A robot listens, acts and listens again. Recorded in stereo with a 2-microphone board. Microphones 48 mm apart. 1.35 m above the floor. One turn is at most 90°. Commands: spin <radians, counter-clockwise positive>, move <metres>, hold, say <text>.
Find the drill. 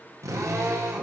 spin -1.57
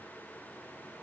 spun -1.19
spin -0.35
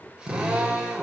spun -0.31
spin -0.17
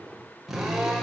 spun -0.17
say Found it: a drill, straight ahead, over 4 m away.